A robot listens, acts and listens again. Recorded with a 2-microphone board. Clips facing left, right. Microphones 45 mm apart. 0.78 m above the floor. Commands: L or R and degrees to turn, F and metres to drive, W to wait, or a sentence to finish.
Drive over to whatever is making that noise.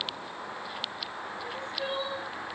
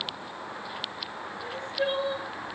R60
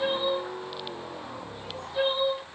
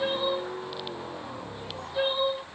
F1.0
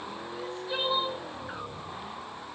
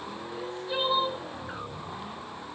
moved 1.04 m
F1.0
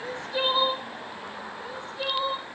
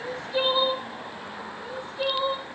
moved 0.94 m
F1.0
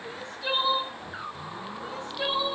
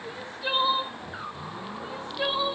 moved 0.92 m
R10
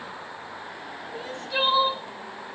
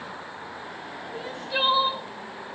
F1.0
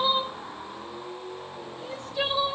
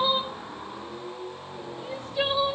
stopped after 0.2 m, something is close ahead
R10
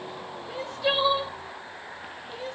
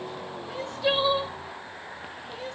Arrived at the crying, straight ahead.